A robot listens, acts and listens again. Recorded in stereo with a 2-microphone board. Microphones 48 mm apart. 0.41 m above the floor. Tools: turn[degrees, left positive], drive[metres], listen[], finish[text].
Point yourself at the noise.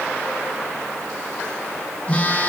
Thought: The phone buzzing: about 25° left or 155° left.
Action: turn[25]
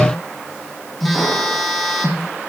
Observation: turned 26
Action: finish[Facing the phone buzzing, over 4 m away.]